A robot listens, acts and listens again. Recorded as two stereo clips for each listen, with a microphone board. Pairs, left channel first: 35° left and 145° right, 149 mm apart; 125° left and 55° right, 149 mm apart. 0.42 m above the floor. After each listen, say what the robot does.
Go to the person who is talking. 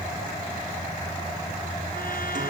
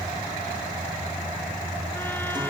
Keep listening.
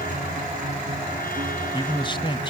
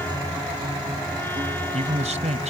Turn 20° right.
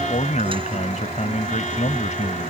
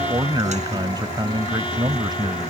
Drive 1.0 m forward.
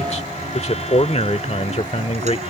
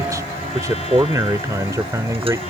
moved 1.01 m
Drive 1.0 m forward.
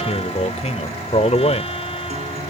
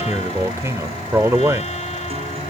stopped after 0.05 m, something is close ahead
Turn 10° left.
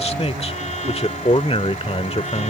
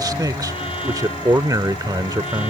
I am next to the man speaking.